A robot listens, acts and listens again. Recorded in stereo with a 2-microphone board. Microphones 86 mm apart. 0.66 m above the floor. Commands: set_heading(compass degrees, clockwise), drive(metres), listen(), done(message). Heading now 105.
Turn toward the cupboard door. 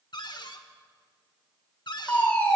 set_heading(50)
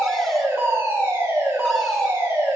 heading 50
listen()
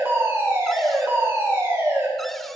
listen()
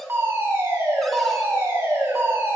done("I heard a cupboard door, but can't make it out now. It was about straight ahead or 70° left.")